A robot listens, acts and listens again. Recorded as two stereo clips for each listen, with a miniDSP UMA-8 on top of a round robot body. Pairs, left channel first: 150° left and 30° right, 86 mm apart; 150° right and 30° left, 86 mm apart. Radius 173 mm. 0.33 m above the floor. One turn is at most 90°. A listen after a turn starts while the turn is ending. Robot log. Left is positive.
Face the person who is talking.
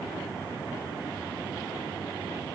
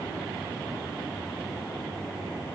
cmd idle
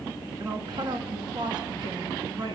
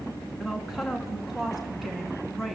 note: The woman speaking: 60° right.
cmd yaw -60
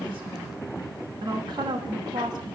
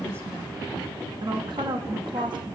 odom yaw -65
end: Found it: a woman speaking, straight ahead, over 4 m away.